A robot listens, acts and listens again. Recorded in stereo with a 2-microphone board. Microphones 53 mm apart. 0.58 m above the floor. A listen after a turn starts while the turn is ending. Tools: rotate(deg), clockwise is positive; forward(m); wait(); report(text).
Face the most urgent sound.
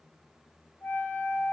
wait()
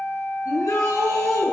rotate(-90)
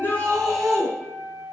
report("Facing the shout, over 4 m away.")